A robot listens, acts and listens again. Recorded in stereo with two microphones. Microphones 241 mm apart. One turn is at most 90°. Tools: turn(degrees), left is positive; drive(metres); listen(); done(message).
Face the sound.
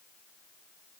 listen()
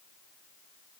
listen()
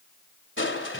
turn(degrees=55)
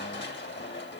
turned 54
turn(degrees=60)
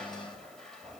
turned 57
done("Found it: crushing, straight ahead, 2 to 4 m away.")